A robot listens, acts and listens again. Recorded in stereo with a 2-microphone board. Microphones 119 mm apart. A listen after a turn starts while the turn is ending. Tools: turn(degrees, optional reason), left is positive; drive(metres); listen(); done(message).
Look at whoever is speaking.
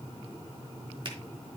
listen()
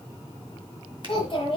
turn(degrees=45, reason="The child speaking: about 45° left or 135° left.")
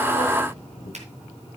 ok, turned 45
turn(degrees=90, reason="So it is at 90° left.")
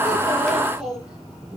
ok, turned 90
done("Found it: a child speaking, straight ahead, over 4 m away.")